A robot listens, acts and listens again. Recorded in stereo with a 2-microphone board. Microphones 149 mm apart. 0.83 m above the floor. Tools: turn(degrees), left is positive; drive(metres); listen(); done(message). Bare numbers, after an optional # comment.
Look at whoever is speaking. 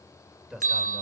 turn(30)
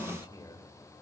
# So it is at 150° left.
turn(150)
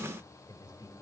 # The man speaking is now 25° left.
turn(25)
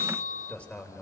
# The man speaking is now 10° left.
turn(10)
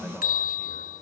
listen()
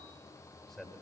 done("Found it: a man speaking, straight ahead.")